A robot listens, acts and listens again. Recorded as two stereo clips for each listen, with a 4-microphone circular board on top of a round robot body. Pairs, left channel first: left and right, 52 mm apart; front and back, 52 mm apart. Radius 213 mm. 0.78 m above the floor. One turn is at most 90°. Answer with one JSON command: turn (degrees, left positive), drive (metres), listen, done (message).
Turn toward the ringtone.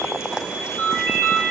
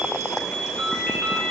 {"turn": -60}
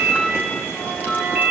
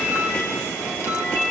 {"turn": -10}
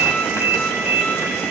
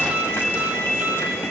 {"done": "Facing the ringtone, 2 to 4 m away."}